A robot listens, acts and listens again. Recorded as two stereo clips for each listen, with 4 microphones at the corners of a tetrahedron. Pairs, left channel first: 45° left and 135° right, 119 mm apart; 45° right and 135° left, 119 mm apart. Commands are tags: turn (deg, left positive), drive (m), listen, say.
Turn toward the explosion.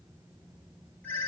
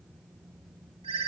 <listen/>
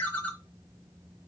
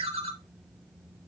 <listen/>
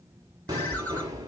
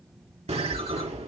<turn deg="165"/>
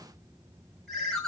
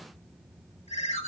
<say>I heard an explosion from this way, but can't make it out now.</say>